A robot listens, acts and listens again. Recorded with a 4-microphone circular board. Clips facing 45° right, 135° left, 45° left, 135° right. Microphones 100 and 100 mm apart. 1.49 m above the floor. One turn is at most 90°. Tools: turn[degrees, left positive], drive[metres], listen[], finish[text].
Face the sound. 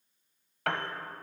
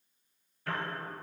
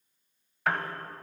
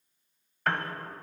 Thought: The piano: 45° right.
Action: turn[-45]
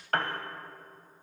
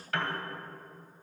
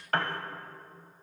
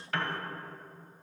Action: finish[Facing the piano, under 1 m away.]